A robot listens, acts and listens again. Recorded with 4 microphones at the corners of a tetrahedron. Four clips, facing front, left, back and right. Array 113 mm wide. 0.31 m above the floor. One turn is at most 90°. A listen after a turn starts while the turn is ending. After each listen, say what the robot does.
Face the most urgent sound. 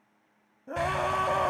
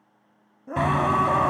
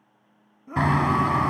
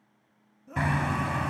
Turn 80° left.
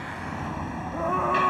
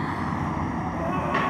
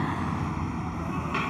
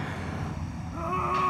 Keep listening.
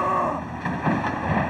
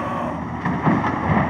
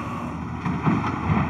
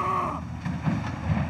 Turn 10° left.
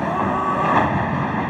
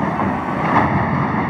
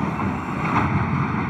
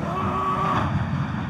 Keep listening.
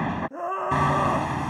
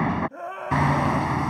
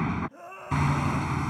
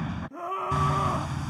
Found it: a scream, straight ahead.